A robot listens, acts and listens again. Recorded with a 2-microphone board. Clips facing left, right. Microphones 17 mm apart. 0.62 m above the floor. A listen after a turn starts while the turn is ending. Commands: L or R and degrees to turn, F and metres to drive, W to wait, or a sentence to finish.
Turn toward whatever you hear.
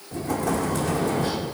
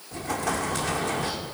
R35
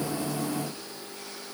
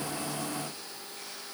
W
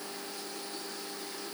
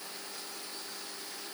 I heard an explosion, but can't make it out now. It was about straight ahead or 110° right.